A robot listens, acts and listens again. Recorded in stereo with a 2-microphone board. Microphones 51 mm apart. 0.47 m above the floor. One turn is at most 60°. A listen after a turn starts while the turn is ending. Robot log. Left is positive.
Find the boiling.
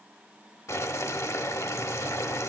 note: The boiling: about 75° left or 105° left.
cmd yaw +60
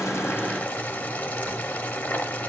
note: So it is at 30° left.
cmd yaw +30
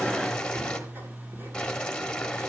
note: The boiling is now 15° left.
cmd yaw +15
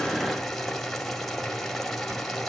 end: Found it: boiling, straight ahead.